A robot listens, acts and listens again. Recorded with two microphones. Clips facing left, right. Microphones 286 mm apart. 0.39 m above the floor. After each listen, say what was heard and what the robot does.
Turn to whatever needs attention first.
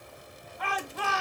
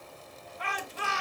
The shout: about 60° left or 120° left. Turn 60° left.
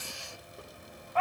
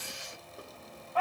So it is at 10° left. Turn 10° left.
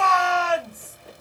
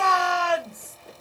Facing the shout, 2 to 4 m away.